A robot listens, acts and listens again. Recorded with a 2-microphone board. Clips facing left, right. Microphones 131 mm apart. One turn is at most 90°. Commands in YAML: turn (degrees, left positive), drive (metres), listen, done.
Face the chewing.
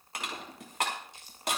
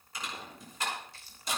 turn: 20
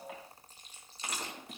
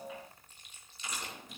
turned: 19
turn: 90
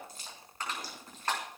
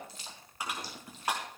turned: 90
turn: 50
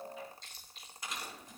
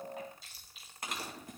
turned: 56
done: "Found it: chewing, straight ahead."